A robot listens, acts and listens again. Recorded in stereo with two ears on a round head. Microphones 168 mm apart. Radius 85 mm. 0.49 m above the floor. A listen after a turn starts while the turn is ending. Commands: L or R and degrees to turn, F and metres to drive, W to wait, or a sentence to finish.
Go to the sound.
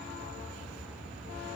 W
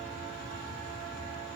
W
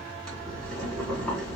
L30
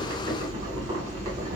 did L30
R30
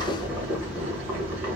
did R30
R10
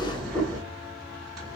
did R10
F1.0
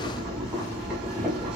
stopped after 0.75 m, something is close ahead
R10
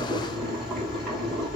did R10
Arrived at the boiling, straight ahead.